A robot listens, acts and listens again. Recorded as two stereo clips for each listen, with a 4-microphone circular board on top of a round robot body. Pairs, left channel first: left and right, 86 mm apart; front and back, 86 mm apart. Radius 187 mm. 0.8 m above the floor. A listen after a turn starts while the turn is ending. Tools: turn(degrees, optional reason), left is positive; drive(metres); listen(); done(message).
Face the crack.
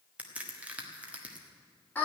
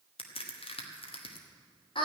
turn(degrees=-15, reason="The crack: 15° right.")
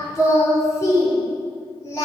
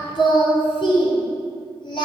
done("I heard a crack from this way, but can't make it out now.")